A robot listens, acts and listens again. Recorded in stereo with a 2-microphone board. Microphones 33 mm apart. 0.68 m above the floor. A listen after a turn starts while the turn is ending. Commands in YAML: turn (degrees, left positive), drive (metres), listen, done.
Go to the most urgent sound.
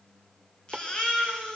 turn: 25
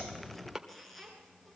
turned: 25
drive: 1.0
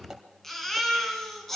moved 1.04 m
drive: 1.0
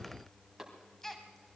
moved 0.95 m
turn: 10
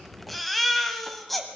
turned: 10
drive: 1.0
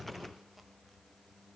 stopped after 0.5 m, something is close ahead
listen: true
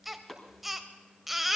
turn: -10
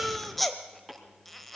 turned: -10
done: "I am next to the baby crying."